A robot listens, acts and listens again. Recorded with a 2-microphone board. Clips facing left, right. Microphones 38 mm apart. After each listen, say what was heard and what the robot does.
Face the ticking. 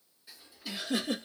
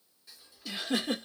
Turn 30° left.
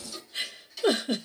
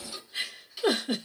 So it is at 20° right. Turn 20° right.
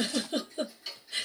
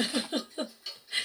Found it: ticking, straight ahead.